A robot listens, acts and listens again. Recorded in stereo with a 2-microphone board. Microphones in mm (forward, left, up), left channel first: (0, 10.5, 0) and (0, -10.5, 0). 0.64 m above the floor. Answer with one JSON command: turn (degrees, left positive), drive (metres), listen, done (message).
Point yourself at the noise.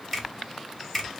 {"turn": 30}
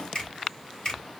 {"turn": 140}
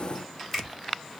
{"done": "Found it: a finger snap, straight ahead, 2 to 4 m away."}